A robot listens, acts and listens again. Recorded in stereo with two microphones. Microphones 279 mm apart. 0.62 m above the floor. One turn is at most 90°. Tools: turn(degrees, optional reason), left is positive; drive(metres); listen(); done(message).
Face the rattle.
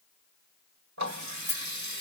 turn(degrees=40, reason="The rattle: about 40° left or 140° left.")
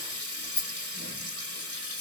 turn(degrees=90, reason="So it is at 105° left.")
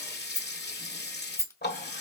turn(degrees=10, reason="The rattle is now 10° left.")
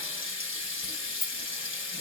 done("Facing the rattle.")